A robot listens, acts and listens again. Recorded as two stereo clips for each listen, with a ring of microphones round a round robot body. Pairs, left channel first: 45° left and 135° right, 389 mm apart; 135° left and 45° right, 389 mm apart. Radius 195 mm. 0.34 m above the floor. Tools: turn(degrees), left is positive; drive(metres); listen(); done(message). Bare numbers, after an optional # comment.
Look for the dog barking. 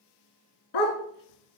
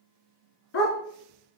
# The dog barking: 75° left.
turn(75)
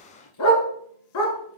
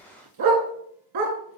done("Facing the dog barking, 1 to 2 m away.")